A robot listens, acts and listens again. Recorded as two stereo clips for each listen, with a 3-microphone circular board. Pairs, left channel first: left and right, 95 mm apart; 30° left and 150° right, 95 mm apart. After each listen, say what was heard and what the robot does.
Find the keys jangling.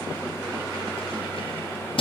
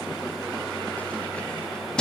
The keys jangling: 110° left. Turn 110° left.
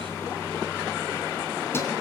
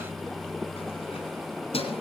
The keys jangling is now 25° left. Turn 25° left.
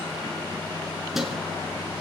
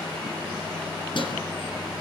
Facing the keys jangling, 2 to 4 m away.